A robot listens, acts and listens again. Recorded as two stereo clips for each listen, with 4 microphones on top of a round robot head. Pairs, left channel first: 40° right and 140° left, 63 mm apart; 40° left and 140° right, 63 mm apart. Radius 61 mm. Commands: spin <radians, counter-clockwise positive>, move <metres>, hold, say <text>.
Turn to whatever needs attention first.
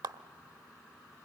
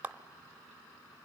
hold
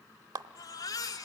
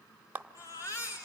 say Found it: a baby crying, straight ahead, 2 to 4 m away.